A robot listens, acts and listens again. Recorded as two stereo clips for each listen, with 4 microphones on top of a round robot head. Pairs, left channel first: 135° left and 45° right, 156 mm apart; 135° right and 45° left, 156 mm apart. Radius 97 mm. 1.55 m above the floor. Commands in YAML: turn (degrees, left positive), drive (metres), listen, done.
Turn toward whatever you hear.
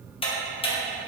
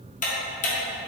turn: -170
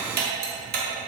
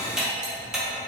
turn: -40
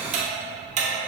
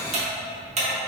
done: "Found it: ticking, straight ahead."